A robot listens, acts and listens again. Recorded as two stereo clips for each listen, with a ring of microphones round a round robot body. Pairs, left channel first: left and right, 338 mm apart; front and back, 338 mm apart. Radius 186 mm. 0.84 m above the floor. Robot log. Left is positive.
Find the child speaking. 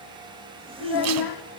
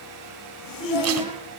note: The child speaking: 105° left.
cmd yaw +105
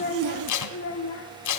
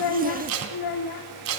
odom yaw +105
note: The child speaking is now 40° left.
cmd yaw +40
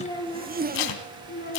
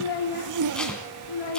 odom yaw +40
note: The child speaking is now 20° left.
cmd yaw +20
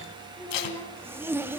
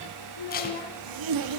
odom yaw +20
note: The child speaking is now 10° left.
cmd yaw +10
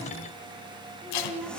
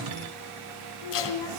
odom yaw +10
end: Found it: a child speaking, straight ahead, 2 to 4 m away.